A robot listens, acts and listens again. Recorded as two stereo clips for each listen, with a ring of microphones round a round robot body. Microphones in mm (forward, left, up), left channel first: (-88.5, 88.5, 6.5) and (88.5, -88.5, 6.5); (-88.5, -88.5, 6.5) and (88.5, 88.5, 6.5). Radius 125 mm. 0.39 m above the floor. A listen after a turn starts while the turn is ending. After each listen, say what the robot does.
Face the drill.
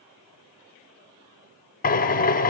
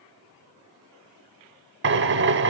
Turn 80° left.
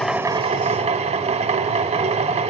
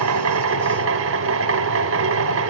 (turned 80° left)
Turn 20° left.
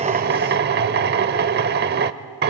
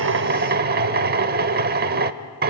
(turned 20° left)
Found it: a drill, straight ahead.